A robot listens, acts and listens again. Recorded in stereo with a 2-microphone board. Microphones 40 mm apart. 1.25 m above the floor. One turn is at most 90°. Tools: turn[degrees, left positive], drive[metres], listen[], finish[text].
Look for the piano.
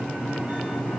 Action: listen[]
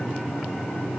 Action: listen[]
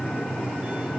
Action: finish[I can't make out a piano.]